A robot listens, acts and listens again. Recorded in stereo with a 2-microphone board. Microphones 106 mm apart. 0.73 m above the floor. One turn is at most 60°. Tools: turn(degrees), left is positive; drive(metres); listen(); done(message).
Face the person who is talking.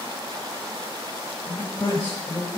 turn(degrees=30)
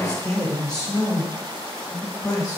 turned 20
turn(degrees=10)
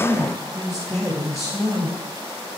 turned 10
done("Found it: a man speaking, straight ahead.")